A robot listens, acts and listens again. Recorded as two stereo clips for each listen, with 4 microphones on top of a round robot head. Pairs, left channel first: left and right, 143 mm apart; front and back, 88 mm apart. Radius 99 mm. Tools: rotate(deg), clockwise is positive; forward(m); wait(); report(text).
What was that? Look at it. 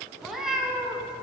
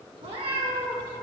rotate(175)
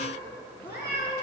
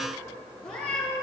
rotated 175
rotate(20)
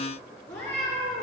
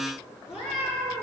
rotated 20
rotate(-10)
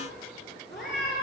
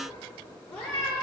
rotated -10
report("Facing the cat meowing.")